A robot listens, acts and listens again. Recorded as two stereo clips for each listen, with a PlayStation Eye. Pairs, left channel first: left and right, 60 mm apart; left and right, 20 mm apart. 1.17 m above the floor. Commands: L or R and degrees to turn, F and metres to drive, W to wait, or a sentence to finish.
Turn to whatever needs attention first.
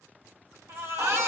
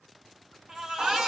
R45
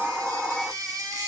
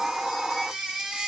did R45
R85
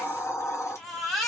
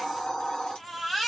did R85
Found it: a baby crying, straight ahead, 1 to 2 m away.